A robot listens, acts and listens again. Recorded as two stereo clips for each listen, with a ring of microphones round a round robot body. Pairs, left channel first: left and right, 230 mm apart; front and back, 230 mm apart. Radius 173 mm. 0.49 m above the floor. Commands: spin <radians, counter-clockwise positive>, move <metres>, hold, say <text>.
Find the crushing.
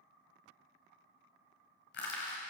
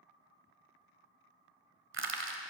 spin 2.53
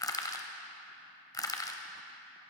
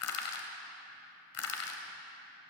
spin 0.26
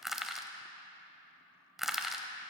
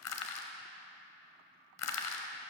say Facing the crushing, 1 to 2 m away.